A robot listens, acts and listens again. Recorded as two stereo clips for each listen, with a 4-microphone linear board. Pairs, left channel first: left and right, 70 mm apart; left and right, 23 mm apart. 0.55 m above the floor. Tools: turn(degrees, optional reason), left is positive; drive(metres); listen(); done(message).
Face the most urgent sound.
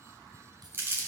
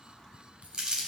listen()
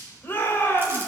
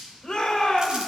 turn(degrees=30, reason="The shout: about 30° left or 150° left.")
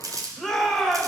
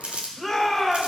done("Found it: a shout, straight ahead.")